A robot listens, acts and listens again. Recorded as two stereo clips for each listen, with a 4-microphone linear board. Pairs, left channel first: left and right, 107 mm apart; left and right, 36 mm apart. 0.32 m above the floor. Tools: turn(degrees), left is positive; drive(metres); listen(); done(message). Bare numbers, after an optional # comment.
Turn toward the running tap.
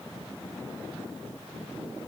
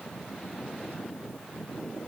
listen()
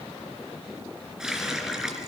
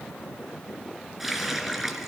turn(-30)
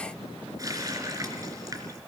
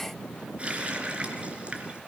# So it is at 145° right.
turn(-145)
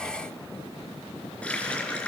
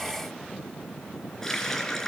# The running tap is now 10° left.
turn(10)
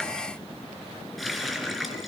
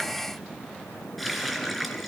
done("Found it: a running tap, straight ahead.")